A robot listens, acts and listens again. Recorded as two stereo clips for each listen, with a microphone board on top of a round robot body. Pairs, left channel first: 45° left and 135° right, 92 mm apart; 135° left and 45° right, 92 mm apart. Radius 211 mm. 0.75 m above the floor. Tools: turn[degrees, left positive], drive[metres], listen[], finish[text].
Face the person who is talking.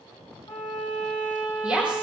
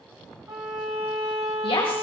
Thought: The woman speaking: 150° left.
Action: turn[150]
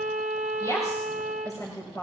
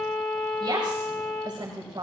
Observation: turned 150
Action: finish[Facing the woman speaking.]